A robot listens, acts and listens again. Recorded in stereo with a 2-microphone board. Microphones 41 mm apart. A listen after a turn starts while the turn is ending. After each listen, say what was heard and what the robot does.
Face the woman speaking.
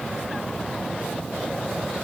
Keep listening.
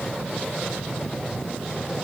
Keep listening.
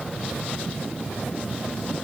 I can't make out a woman speaking to turn to.